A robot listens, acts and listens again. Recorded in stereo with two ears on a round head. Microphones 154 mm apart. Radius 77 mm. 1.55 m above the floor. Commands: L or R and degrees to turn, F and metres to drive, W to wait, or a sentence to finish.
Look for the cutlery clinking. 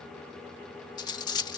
L25
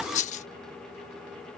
L125
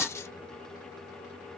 L20
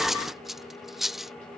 Found it: cutlery clinking, straight ahead.